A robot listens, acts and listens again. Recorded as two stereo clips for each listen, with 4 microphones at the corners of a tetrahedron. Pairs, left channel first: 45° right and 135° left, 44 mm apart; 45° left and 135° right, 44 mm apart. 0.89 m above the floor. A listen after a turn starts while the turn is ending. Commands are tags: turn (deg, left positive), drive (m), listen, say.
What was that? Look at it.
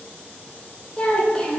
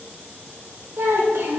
<turn deg="-115"/>
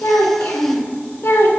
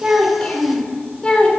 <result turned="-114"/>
<turn deg="-25"/>
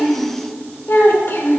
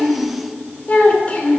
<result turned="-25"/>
<turn deg="-15"/>
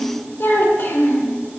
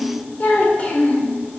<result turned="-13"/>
<turn deg="-15"/>
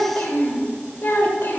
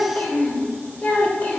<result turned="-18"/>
<say>Found it: a child speaking, straight ahead.</say>